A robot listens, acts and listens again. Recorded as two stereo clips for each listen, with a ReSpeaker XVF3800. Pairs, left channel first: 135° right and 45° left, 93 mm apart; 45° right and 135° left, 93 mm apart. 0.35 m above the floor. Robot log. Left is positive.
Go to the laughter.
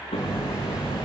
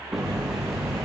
cmd idle
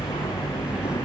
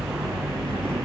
cmd idle
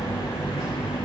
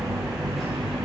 end: I can't make out laughter to turn to.